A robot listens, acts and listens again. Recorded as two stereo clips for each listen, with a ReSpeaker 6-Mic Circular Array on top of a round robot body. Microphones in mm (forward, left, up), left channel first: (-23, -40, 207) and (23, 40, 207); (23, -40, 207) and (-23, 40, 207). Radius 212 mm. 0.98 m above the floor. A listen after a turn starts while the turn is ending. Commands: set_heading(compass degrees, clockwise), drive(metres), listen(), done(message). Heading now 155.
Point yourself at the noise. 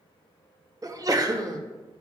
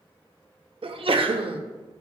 set_heading(45)
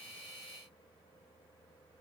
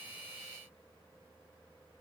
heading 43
done("Facing where the sneeze came from. I can't hear it now.")